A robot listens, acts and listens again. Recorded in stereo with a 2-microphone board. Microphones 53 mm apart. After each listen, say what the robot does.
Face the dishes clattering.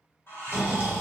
Turn 45° left.
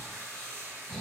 Keep listening.
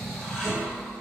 Facing the dishes clattering, 1 to 2 m away.